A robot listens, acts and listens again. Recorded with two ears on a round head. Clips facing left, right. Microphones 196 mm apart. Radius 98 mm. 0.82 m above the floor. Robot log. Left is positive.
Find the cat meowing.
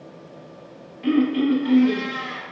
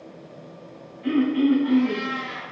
note: The cat meowing: about 75° left or 105° left.
cmd yaw +75
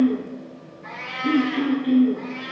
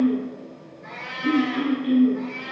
end: Facing the cat meowing.